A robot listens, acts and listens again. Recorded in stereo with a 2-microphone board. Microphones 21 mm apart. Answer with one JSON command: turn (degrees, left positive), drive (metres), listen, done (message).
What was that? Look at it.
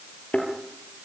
{"turn": 90}
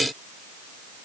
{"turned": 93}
{"done": "Facing where the thud came from. I can't hear it now."}